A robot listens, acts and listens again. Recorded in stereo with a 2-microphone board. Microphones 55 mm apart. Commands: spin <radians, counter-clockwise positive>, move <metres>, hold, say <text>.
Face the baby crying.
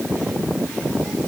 hold
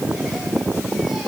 hold
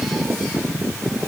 say I can't make out a baby crying to turn to.